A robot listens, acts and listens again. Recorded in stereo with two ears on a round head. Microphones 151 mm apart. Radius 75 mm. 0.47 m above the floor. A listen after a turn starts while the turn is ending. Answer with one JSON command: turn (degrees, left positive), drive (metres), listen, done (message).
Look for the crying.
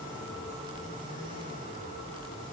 {"listen": true}
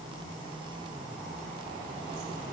{"listen": true}
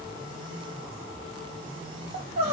{"turn": -35}
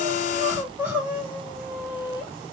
{"turn": -10}
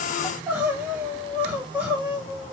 {"turn": -10}
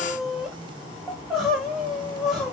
{"done": "Found it: crying, straight ahead."}